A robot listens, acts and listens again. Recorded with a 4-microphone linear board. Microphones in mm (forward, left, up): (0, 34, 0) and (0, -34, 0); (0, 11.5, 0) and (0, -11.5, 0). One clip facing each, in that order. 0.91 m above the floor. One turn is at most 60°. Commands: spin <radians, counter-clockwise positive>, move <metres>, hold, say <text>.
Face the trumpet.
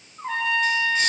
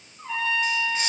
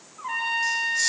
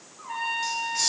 spin 1.05
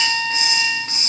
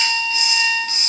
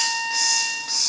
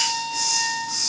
spin 0.79
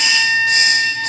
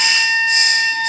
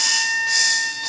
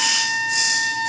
say Facing the trumpet.